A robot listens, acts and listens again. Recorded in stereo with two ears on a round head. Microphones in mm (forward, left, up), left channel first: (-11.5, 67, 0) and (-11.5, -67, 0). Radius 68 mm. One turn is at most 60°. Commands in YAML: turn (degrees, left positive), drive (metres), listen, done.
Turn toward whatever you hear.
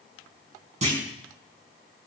turn: -50
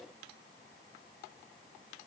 listen: true
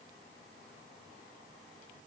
done: "I heard a clunk, but can't make it out now. It was about straight ahead or 80° right."